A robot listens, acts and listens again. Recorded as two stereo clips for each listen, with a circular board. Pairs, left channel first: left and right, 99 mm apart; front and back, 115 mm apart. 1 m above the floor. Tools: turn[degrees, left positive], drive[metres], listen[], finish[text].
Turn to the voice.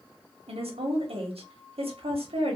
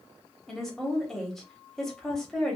Thought: The woman speaking: 85° right.
Action: turn[-85]
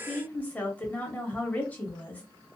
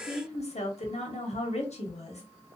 Thought: The woman speaking is now 15° left.
Action: turn[15]
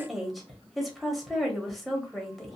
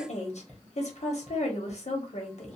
Action: finish[Found it: a woman speaking, straight ahead.]